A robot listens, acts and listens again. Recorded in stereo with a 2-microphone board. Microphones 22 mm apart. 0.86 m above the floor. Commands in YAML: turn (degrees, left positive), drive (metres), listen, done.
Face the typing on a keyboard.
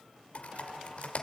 turn: 90
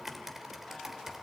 turn: -10
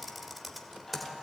done: "Found it: typing on a keyboard, straight ahead."